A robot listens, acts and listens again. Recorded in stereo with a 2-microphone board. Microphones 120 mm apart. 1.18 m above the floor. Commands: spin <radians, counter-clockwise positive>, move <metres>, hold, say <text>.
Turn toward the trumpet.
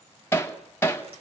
hold
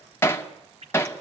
hold
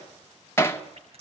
say I can't make out a trumpet, only hammering and dripping.